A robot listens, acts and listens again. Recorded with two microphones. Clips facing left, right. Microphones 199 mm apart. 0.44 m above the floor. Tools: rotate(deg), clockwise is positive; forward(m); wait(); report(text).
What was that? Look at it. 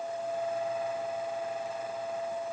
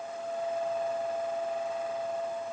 wait()
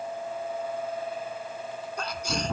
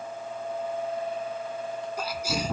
rotate(30)
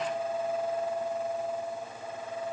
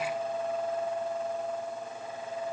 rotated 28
wait()
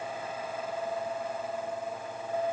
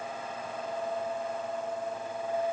report("I heard a sneeze, but can't make it out now. It was about 20° left or 145° right.")